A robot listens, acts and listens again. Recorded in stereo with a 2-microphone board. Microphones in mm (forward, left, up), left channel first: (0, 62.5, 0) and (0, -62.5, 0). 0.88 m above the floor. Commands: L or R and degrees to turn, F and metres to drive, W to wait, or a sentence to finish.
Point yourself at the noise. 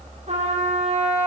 R65
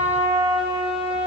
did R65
R45
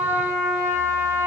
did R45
R20
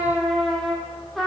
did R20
Facing the trumpet, over 4 m away.